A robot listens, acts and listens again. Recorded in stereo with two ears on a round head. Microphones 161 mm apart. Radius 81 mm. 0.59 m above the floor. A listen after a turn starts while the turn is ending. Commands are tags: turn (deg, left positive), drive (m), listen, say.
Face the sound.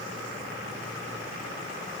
<listen/>
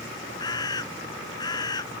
<turn deg="25"/>
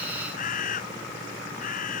<turn deg="130"/>
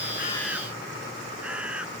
<say>Facing the bird.</say>